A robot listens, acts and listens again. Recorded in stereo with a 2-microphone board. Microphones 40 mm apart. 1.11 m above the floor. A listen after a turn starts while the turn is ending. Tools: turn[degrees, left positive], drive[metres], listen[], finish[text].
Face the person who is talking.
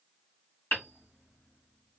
Action: listen[]
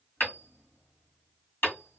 Action: listen[]
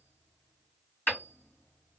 Action: finish[I can't make out anyone speaking, only hammering.]